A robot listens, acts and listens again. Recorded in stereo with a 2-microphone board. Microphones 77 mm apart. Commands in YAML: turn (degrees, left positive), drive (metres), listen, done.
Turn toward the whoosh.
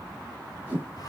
turn: -20
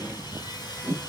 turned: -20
turn: -140
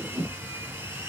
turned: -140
turn: -10
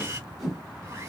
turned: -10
done: "Facing the whoosh, 2 to 4 m away."